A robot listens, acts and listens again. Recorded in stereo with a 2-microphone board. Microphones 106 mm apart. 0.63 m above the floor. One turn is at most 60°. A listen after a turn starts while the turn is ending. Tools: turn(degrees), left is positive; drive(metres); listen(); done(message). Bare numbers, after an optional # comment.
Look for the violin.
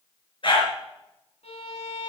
turn(60)
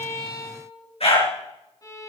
# So it is at 30° left.
turn(30)
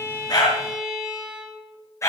# The violin is now 10° right.
turn(-10)
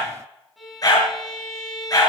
done("Found it: a violin, straight ahead.")